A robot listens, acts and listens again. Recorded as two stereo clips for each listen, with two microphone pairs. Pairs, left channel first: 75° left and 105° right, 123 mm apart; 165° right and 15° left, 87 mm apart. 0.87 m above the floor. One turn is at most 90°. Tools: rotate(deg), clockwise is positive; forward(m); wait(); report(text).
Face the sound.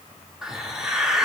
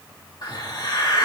rotate(-90)
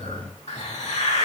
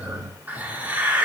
rotate(-80)
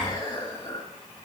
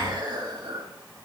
rotate(-30)
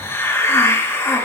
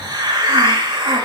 report("Found it: a hiss, straight ahead.")